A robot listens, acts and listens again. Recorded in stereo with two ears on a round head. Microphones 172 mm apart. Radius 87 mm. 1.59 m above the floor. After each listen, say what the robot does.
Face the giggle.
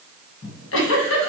Turn 70° left.
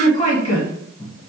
Turn 35° left.
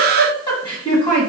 Turn 25° left.
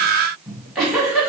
Found it: a giggle, straight ahead, 1 to 2 m away.